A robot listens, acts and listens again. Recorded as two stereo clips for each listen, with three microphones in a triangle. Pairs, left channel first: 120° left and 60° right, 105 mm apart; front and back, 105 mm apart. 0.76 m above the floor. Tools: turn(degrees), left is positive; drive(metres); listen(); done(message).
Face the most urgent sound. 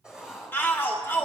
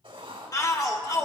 turn(degrees=50)
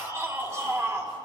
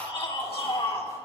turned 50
done("Found it: a shout, straight ahead, 1 to 2 m away.")